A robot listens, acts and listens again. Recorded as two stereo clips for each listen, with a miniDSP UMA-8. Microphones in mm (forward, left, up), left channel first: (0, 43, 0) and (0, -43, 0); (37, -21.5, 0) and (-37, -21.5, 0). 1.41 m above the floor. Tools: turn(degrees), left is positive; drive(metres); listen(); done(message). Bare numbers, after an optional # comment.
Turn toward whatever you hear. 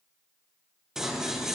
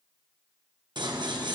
# The scissors: 175° right.
turn(-175)
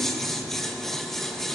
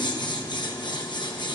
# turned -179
done("Facing the scissors.")